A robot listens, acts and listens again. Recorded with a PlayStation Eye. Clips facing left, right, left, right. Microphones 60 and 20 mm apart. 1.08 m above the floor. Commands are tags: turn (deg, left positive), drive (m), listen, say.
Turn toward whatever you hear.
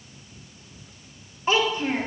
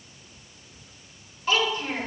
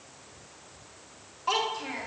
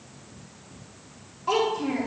<turn deg="25"/>
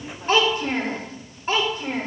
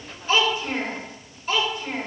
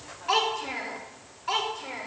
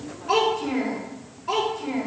<turn deg="40"/>
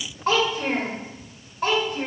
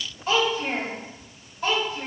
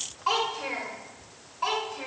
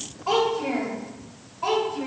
<turn deg="105"/>
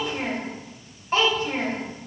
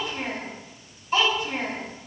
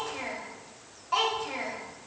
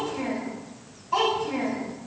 <turn deg="40"/>
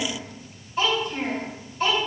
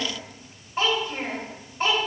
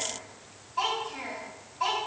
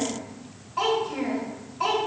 <turn deg="-35"/>
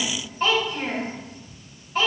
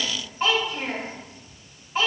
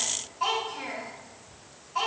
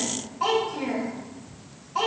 <say>Facing the child speaking.</say>